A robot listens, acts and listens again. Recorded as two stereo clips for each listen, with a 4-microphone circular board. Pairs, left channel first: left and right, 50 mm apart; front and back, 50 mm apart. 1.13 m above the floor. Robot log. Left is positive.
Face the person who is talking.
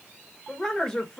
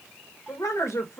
note: The woman speaking: 15° left.
cmd yaw +15
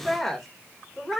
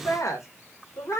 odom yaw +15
end: Found it: a woman speaking, straight ahead, 1 to 2 m away.